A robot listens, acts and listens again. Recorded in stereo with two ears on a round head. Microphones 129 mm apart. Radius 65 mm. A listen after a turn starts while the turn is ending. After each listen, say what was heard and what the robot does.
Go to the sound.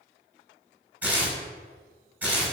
Turn 30° right.
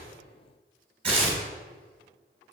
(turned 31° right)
So it is at 135° right. Turn 135° right.
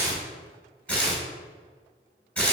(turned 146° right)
The tearing paper is now 10° left. Turn 10° left.
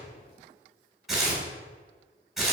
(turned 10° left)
Drive 1.0 m forward.
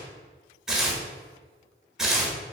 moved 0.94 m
Drive 1.0 m forward.
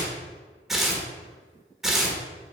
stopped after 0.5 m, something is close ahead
Arrived at the tearing paper, straight ahead.